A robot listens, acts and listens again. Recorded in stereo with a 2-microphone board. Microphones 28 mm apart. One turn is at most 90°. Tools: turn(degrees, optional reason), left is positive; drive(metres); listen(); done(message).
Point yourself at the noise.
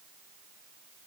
listen()
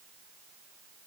listen()
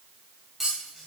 turn(degrees=-30)
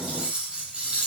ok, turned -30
turn(degrees=-90, reason="So it is at 140° right.")
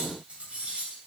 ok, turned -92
turn(degrees=-45, reason="The cutlery clinking is now 45° right.")
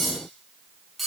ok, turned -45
done("Found it: cutlery clinking, straight ahead, 2 to 4 m away.")